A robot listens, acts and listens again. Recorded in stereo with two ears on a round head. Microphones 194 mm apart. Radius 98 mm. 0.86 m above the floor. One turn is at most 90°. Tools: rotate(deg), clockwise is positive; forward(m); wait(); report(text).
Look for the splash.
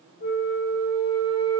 wait()
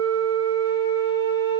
wait()
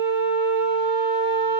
report("I can't make out a splash to turn to.")